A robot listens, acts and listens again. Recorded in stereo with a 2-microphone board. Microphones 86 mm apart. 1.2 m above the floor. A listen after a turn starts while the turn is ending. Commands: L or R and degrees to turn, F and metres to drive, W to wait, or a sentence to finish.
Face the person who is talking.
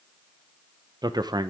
R50
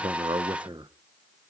R75
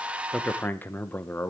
L20
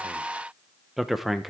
Found it: a man speaking, straight ahead, under 1 m away.